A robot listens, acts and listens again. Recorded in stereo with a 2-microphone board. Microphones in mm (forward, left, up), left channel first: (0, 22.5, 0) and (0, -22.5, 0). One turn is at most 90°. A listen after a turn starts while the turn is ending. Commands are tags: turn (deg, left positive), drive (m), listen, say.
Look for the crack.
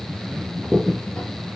<turn deg="30"/>
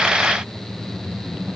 <listen/>
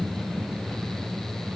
<say>I heard a crack, but can't make it out now. It was about 20° right or 140° left.</say>